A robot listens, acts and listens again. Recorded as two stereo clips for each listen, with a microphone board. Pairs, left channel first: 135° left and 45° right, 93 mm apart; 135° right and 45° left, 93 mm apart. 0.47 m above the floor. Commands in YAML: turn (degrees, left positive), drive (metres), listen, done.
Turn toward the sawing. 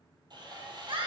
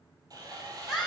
done: "Found it: sawing, straight ahead, 2 to 4 m away."